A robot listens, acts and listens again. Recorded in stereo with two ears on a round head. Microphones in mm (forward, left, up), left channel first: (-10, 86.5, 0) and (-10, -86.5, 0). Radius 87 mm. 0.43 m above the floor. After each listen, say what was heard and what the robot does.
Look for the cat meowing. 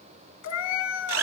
The cat meowing: about 70° left or 110° left. Turn 70° left.
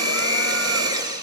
Keep listening.
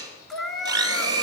Found it: a cat meowing, straight ahead, 1 to 2 m away.